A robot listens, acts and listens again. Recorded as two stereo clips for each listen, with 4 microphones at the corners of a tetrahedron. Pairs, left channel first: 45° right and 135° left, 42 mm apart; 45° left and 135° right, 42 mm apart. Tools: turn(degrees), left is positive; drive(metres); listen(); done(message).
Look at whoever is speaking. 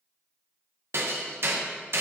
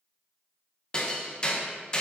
listen()
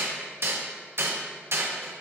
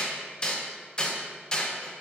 listen()
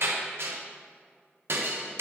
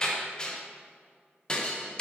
done("I can't make out anyone speaking to turn to.")